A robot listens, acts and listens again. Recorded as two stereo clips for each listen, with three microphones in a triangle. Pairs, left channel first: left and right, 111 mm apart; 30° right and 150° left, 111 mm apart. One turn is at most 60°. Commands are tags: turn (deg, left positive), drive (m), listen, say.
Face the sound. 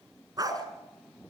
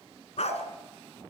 <turn deg="-35"/>
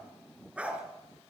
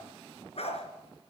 <turn deg="-10"/>
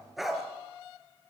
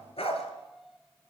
<say>Found it: a dog barking, straight ahead, 2 to 4 m away.</say>